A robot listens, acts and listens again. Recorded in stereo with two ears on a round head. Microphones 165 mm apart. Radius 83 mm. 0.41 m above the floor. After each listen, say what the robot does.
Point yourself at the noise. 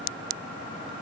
Keep listening.
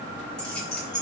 Turn 30° left.
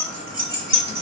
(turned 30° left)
Turn 30° right.
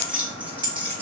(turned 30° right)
Turn 10° right.
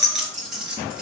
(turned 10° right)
Found it: keys jangling, straight ahead, over 4 m away.